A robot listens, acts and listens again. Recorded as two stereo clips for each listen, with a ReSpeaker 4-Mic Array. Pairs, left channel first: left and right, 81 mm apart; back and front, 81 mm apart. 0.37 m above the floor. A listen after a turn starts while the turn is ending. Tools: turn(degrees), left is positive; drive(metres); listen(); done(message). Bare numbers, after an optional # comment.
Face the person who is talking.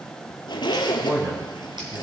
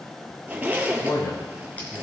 # The man speaking: 145° right.
turn(-145)
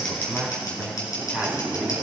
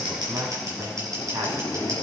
# The man speaking is now 10° left.
turn(10)
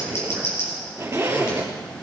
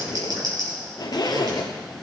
listen()
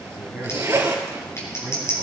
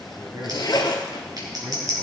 done("Facing the man speaking.")